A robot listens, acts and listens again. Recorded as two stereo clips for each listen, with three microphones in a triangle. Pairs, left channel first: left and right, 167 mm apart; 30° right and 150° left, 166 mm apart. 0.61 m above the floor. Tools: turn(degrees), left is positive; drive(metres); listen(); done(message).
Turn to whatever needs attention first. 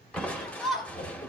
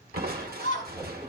done("Facing the shout.")